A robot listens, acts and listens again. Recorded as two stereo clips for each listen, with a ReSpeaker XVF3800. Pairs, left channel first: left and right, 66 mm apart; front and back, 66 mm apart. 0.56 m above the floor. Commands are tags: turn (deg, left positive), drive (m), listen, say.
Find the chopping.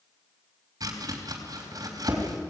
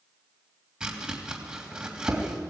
<turn deg="-105"/>
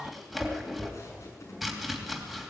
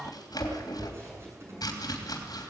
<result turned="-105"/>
<say>Found it: chopping, straight ahead.</say>